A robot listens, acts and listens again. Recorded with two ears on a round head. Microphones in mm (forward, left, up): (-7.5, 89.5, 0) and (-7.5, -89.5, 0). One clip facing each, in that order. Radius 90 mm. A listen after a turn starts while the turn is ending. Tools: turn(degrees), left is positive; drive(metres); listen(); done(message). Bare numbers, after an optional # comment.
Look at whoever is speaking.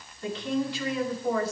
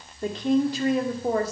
# The woman speaking: about 40° right or 140° right.
turn(-40)
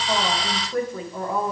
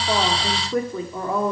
# So it is at 100° right.
turn(-100)
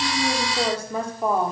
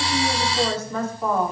# The woman speaking is now 10° left.
turn(10)
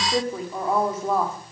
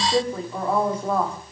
done("Found it: a woman speaking, straight ahead.")